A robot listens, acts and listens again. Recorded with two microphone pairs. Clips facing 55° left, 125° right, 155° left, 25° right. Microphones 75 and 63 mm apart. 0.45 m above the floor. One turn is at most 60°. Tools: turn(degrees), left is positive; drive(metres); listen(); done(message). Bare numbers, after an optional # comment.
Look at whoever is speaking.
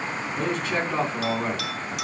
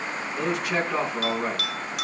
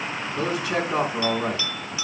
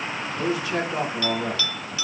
# The man speaking: 160° left.
turn(60)
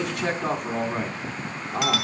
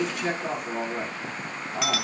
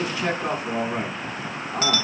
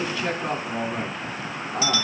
# The man speaking is now 85° left.
turn(60)
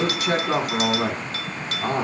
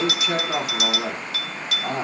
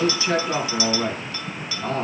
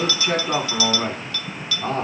# The man speaking is now 30° left.
turn(30)
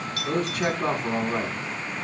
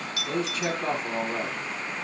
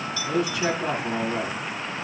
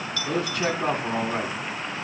# The man speaking is now 20° left.
turn(20)
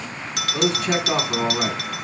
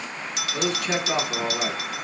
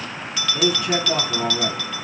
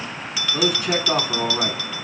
done("Found it: a man speaking, straight ahead, 2 to 4 m away.")